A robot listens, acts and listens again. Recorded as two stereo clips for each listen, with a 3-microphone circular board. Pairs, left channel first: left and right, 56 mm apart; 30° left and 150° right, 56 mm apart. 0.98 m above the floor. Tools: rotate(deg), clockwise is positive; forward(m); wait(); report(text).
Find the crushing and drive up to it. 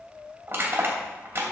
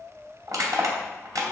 rotate(140)
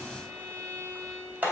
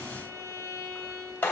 rotate(30)
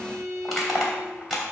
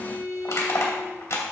forward(1.0)
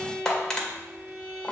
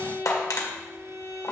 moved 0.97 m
rotate(-15)
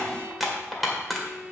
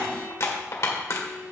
forward(1.0)
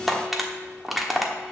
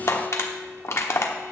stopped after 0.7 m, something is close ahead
report("Arrived at the crushing, straight ahead.")